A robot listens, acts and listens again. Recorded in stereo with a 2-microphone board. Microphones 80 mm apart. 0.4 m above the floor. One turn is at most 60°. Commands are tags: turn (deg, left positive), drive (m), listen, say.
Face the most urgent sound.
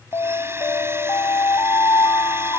<turn deg="60"/>
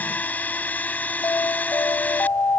<turn deg="45"/>
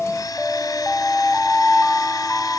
<say>Facing the alarm.</say>